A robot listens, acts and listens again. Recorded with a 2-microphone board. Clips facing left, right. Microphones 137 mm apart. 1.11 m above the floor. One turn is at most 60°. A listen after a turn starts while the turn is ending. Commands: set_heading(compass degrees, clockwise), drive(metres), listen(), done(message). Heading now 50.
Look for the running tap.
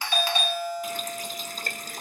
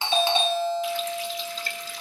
set_heading(5)
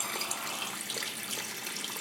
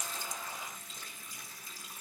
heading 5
set_heading(305)
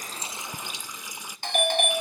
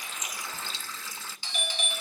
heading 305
set_heading(290)
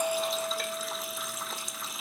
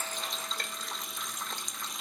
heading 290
done("Found it: a running tap, straight ahead, 1 to 2 m away.")